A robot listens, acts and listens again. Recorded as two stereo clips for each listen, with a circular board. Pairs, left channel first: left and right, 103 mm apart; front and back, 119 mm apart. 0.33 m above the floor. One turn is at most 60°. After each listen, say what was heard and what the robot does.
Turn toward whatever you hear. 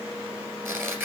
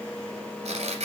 The tearing paper: 155° right. Turn 60° right.
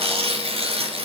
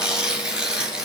The tearing paper is now 95° right. Turn 60° right.
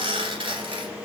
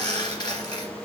The tearing paper is now 55° right. Turn 55° right.
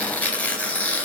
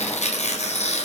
The tearing paper is now 15° left. Turn 15° left.
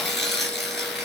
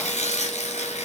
Found it: tearing paper, straight ahead.